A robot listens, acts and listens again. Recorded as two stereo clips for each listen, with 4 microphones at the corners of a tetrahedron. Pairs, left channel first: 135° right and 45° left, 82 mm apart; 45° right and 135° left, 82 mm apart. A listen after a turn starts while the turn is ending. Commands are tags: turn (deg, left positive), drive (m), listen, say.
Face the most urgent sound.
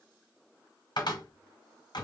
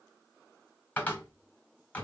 <listen/>
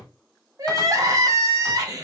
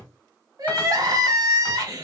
<turn deg="90"/>
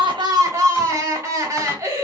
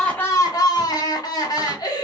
<turn deg="-10"/>
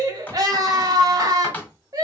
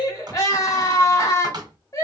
<say>Facing the crying, under 1 m away.</say>